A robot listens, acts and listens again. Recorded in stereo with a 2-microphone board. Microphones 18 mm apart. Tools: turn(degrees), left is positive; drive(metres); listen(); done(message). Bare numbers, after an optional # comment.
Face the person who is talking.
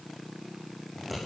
listen()
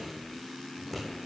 listen()
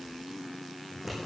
done("I can't make out anyone speaking, only scissors.")